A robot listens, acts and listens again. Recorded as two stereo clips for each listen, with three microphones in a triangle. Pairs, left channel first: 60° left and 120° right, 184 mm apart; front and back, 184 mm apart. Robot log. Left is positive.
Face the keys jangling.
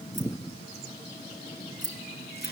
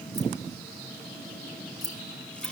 note: The keys jangling: 110° right.
cmd yaw -110
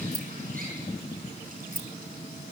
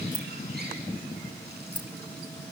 note: The keys jangling is now 10° left.
cmd yaw +10
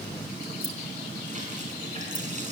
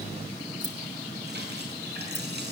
cmd idle
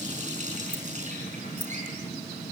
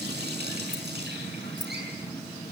cmd idle
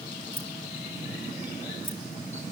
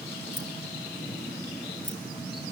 end: Facing where the keys jangling came from. I can't hear it now.